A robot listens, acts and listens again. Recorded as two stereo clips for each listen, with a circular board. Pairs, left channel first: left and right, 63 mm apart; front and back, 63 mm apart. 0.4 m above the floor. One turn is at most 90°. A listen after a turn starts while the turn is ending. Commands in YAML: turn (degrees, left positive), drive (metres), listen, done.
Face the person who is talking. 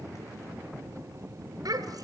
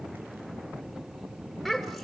turn: -85
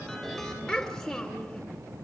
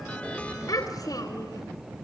turn: 15
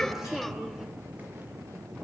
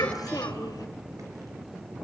done: "Facing the child speaking, 2 to 4 m away."